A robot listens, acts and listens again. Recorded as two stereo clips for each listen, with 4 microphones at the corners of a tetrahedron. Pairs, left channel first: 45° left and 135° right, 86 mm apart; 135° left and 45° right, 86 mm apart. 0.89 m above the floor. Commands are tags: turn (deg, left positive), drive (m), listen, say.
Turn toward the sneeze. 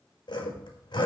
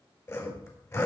<listen/>
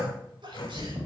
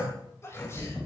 <turn deg="-165"/>
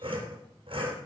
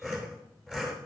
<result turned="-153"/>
<turn deg="-10"/>
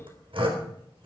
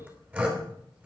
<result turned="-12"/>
<say>I heard a sneeze from this way, but can't make it out now.</say>